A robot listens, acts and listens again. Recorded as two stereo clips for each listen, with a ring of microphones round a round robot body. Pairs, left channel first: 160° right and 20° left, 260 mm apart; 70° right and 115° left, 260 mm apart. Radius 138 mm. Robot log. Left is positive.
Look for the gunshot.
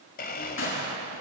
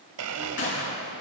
note: The gunshot: 115° right.
cmd yaw -115
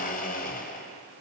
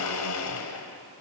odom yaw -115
end: Facing where the gunshot came from. I can't hear it now.